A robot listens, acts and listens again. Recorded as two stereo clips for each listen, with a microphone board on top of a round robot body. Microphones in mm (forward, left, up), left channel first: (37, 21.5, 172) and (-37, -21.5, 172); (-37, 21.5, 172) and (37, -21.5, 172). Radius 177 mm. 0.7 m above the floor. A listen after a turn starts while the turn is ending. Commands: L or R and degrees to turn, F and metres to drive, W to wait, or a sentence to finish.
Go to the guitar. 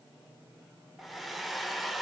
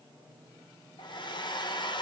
W
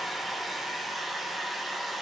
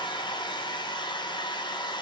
W
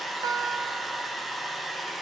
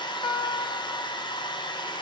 L170
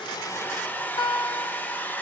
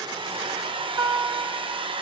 L10
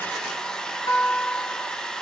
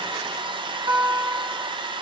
F1.0
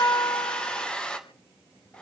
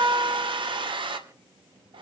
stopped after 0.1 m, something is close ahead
Something is in my way. I am facing the guitar but have not reached it.